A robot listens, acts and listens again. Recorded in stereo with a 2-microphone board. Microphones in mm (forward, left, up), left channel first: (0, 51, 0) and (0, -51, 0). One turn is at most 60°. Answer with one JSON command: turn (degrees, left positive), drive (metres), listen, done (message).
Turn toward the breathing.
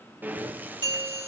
{"turn": -15}
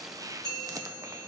{"turn": -60}
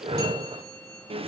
{"turn": -60}
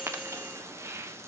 {"turn": -25}
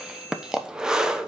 {"done": "Facing the breathing."}